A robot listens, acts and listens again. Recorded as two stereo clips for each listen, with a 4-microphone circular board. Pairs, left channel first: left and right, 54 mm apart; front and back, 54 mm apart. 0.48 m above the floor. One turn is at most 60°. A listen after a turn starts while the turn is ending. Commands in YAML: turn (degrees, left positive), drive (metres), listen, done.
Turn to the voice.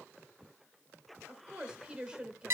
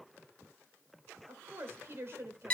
turn: -60
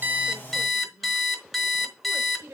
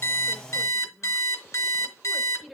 turn: -60
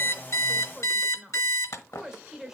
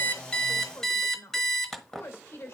turn: -15
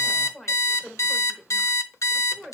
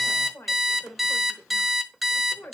done: "Facing the woman speaking."